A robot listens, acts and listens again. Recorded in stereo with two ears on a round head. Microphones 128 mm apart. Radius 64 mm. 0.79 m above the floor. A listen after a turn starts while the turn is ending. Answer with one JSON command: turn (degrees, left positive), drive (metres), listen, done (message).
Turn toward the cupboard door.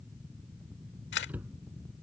{"turn": -30}
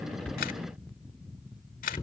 {"turn": 25}
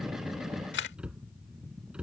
{"done": "Found it: a cupboard door, straight ahead."}